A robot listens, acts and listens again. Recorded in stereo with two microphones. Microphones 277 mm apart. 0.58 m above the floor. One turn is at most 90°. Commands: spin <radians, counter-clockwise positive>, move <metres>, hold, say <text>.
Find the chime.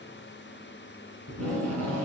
hold
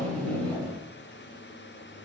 hold
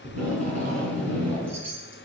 spin -1.13
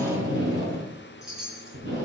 say Found it: a chime, straight ahead, 2 to 4 m away.